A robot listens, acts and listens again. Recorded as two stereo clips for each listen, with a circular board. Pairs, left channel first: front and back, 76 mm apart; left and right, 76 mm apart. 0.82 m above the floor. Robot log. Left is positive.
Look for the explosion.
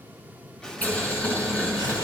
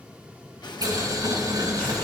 note: The explosion: 80° left.
cmd yaw +80
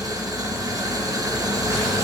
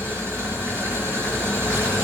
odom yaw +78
end: I heard an explosion from this way, but can't make it out now.